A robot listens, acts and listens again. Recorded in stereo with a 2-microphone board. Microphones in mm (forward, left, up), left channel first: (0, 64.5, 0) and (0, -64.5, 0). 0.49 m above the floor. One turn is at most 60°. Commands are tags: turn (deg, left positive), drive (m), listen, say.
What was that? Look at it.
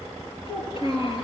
<turn deg="45"/>
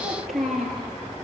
<say>Found it: a child speaking, straight ahead.</say>